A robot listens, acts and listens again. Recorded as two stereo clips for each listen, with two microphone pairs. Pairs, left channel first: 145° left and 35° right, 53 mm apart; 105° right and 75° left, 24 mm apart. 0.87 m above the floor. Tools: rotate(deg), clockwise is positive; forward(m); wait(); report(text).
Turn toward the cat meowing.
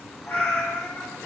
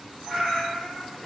rotate(-85)
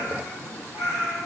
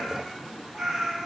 rotate(20)
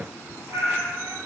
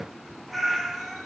rotate(20)
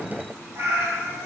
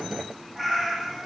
rotate(15)
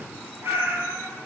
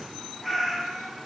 rotate(15)
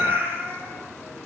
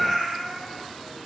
report("Found it: a cat meowing, straight ahead.")